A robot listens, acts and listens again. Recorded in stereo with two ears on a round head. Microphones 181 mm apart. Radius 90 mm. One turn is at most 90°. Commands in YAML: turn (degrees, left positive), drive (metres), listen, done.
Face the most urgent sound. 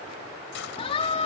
turn: 30
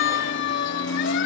turn: 90
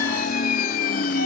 turn: 45
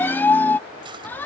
turn: 10
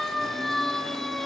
done: "Facing the siren."